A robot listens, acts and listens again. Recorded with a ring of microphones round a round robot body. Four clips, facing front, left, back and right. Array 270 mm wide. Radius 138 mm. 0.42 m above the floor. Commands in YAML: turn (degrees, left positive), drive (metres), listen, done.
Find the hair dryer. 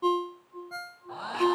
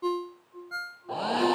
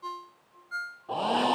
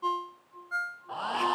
turn: 145
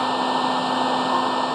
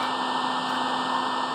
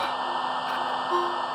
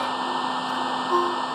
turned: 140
done: "Facing the hair dryer."